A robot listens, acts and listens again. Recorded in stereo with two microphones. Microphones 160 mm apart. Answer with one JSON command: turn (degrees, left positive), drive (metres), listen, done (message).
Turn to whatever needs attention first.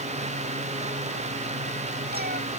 {"listen": true}
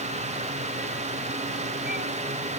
{"listen": true}
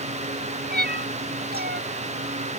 {"done": "I can't make out anything urgent, only a cat meowing."}